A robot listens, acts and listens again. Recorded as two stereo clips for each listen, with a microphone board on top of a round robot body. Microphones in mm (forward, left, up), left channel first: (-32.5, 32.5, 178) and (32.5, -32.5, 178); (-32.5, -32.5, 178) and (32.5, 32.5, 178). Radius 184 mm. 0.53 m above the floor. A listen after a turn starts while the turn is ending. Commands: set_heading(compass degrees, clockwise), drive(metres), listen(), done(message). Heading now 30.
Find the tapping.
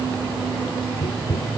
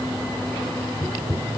set_heading(265)
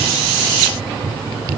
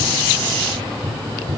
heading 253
set_heading(268)
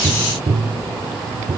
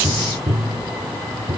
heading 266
done("Facing the tapping.")